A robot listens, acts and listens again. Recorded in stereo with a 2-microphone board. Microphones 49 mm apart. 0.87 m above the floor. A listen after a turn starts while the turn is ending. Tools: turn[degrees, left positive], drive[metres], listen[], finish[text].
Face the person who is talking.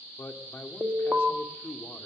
Thought: The man speaking: about 55° left or 125° left.
Action: turn[55]
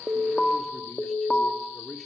Action: finish[Found it: a man speaking, straight ahead, 2 to 4 m away.]